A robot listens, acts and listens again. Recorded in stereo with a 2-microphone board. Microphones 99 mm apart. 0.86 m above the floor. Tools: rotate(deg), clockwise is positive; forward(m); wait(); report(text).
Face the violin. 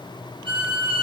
rotate(60)
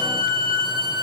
rotate(60)
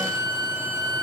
rotate(-15)
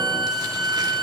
report("Found it: a violin, straight ahead.")